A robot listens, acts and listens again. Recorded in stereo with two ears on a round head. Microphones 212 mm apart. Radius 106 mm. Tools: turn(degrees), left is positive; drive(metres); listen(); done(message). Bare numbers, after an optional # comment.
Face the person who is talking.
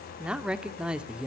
turn(-30)
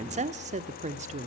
# So it is at 145° right.
turn(-145)
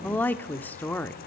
# The woman speaking is now 10° left.
turn(10)
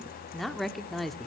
done("Facing the woman speaking, 1 to 2 m away.")